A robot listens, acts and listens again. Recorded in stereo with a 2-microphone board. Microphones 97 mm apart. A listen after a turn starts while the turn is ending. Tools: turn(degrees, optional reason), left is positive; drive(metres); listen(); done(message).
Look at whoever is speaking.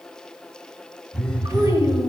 turn(degrees=-35, reason="The child speaking: about 35° right or 145° right.")
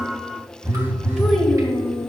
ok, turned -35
done("Facing the child speaking.")